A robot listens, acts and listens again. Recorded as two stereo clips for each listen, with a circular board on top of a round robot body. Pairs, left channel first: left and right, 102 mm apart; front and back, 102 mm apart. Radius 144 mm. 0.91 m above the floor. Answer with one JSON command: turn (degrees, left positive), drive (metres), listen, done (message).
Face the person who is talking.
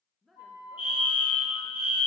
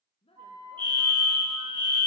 {"done": "Facing the woman speaking, 1 to 2 m away."}